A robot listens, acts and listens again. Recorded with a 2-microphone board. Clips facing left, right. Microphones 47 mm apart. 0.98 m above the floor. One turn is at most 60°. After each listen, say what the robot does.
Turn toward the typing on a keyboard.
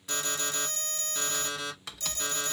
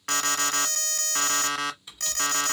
Turn 60° left.
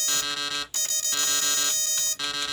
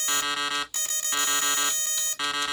Turn 30° left.
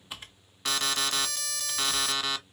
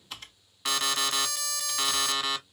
Turn 15° left.
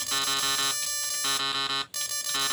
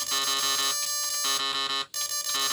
Keep listening.
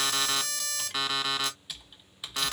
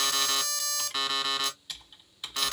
Found it: typing on a keyboard, straight ahead.